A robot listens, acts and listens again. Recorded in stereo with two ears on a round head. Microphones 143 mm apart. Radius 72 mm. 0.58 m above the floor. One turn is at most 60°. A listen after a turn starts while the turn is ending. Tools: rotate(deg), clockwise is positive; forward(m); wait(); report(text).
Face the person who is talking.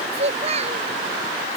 rotate(40)
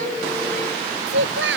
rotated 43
rotate(60)
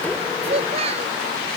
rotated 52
rotate(40)
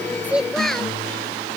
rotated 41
report("Found it: a child speaking, straight ahead.")